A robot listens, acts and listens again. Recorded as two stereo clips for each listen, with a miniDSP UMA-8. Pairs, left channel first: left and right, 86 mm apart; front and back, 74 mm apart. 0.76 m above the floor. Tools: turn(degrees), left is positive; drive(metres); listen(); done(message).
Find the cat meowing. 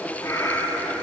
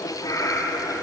turn(degrees=35)
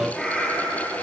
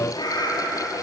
done("Found it: a cat meowing, straight ahead, over 4 m away.")